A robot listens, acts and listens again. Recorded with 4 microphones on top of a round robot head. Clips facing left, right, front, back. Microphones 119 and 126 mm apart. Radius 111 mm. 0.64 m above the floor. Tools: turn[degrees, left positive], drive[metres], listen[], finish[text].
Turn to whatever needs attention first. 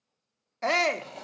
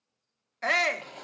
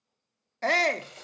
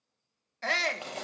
Thought: The shout: 35° left.
Action: turn[35]
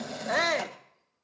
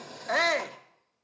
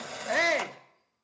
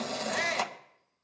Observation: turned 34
Action: finish[Facing the shout.]